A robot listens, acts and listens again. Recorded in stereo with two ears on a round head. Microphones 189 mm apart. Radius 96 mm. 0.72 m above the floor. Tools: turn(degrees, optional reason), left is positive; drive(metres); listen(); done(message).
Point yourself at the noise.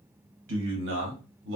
turn(degrees=-60, reason="The man speaking: about 60° right or 120° right.")
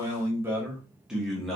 done("Found it: a man speaking, straight ahead, 1 to 2 m away.")